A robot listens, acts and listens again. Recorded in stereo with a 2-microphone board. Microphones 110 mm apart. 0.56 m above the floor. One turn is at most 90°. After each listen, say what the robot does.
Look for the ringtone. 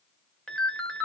Turn 30° left.
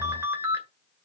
Turn 25° right.
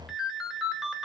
Facing the ringtone, 1 to 2 m away.